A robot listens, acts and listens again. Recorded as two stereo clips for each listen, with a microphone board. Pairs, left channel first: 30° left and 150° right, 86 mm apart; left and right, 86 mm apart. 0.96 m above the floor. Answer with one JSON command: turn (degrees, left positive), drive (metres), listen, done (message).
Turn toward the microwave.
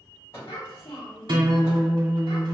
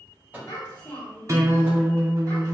{"turn": -20}
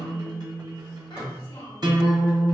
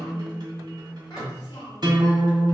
{"listen": true}
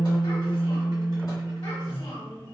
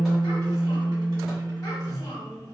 {"listen": true}
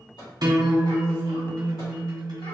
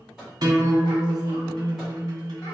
{"done": "Facing the microwave."}